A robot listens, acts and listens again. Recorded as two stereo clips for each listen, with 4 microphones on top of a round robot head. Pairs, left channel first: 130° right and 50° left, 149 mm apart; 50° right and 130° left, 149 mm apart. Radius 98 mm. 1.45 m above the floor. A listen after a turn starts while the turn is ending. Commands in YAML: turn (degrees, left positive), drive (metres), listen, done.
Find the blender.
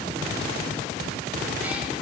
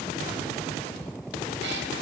listen: true
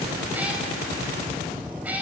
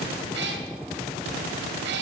listen: true
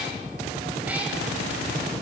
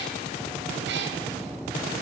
done: "I can't make out a blender to turn to."